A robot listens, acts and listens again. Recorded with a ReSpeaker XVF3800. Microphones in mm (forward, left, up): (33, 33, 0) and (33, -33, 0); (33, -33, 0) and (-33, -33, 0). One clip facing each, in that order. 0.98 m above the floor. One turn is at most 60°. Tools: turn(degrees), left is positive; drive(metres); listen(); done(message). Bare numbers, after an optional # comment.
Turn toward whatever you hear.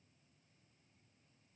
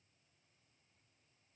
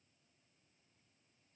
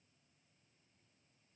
listen()
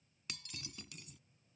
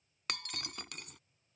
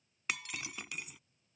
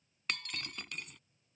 # The breaking glass: 85° right.
turn(-60)
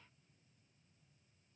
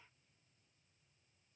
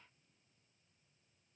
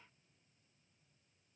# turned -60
# Nothing new. It was at 25° right.
turn(-25)
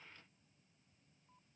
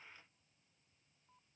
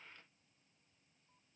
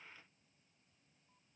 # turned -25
done("I heard breaking glass from this way, but can't make it out now.")